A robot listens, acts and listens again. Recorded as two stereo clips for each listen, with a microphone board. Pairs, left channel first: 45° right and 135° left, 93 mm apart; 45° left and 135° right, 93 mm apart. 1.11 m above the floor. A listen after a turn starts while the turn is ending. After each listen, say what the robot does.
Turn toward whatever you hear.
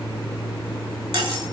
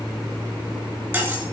Turn 160° left.
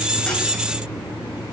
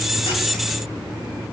Keep listening.
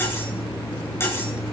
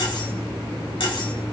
Turn 20° left.
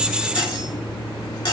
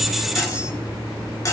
Found it: cutlery clinking, straight ahead, 2 to 4 m away.